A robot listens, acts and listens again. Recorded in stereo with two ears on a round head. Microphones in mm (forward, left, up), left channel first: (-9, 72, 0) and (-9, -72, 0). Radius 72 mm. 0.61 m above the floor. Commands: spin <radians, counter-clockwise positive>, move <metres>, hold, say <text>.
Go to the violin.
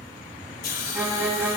spin -0.52
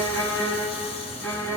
spin 0.26
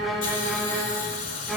move 1.0
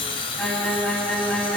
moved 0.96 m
move 1.0
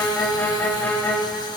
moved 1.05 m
spin 0.17
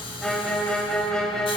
move 1.0
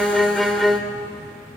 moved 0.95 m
move 1.0
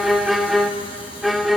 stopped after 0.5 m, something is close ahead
say I am next to the violin.